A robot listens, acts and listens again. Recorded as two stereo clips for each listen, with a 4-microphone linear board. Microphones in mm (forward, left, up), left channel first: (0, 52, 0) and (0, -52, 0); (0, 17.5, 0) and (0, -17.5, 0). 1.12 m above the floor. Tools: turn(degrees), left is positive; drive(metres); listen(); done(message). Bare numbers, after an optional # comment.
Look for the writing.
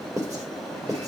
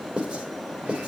# The writing: about 35° right or 145° right.
turn(-35)
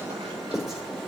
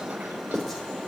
done("Found it: writing, straight ahead.")